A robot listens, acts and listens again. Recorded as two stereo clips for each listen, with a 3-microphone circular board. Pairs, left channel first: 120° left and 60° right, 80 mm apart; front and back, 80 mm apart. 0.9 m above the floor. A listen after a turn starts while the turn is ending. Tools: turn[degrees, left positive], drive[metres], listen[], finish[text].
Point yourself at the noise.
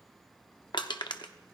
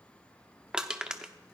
Thought: The crushing: 100° left.
Action: turn[100]
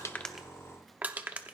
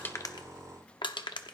Thought: The crushing is now 10° left.
Action: turn[10]
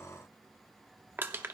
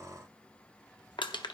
Action: finish[Found it: crushing, straight ahead, under 1 m away.]